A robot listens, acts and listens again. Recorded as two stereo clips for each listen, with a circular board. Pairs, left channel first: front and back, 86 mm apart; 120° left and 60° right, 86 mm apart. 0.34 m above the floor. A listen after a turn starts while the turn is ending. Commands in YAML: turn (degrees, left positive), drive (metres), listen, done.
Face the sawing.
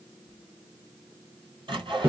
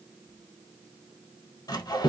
turn: 160
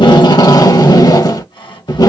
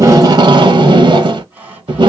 turn: 10
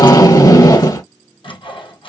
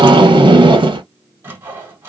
done: "Facing the sawing."